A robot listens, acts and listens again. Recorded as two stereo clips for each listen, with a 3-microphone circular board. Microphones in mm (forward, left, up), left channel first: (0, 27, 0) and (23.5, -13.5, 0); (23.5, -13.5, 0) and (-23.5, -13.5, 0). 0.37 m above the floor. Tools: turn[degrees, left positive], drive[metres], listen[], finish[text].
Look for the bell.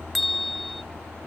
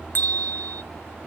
Thought: The bell: 35° left.
Action: turn[35]
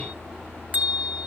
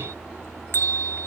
Action: finish[Found it: a bell, straight ahead.]